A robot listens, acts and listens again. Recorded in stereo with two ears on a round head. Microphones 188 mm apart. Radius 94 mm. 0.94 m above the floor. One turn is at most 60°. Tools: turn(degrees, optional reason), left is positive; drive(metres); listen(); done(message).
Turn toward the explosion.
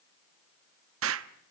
turn(degrees=-60, reason="The explosion: about 70° right or 110° right.")
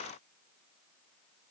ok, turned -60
listen()
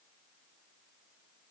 done("I heard an explosion, but can't make it out now. It was about 10° right or 50° right.")